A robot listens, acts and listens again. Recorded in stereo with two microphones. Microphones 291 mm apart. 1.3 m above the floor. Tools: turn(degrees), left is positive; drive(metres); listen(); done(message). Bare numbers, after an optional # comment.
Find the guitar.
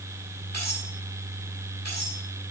listen()
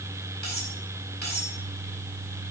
listen()
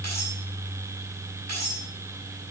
done("I can't make out a guitar to turn to.")